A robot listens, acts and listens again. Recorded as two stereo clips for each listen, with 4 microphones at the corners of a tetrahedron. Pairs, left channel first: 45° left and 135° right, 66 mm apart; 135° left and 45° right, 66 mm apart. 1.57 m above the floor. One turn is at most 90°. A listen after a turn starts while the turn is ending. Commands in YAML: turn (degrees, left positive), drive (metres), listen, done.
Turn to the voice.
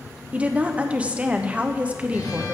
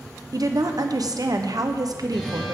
turn: -65
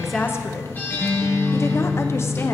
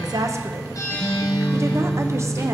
done: "Facing the woman speaking, 1 to 2 m away."